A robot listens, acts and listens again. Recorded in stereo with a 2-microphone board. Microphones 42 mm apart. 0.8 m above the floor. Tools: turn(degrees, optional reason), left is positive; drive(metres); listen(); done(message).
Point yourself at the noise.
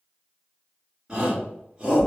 turn(degrees=-25, reason="The shout: about 25° right or 155° right.")
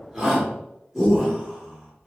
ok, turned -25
done("Found it: a shout, straight ahead.")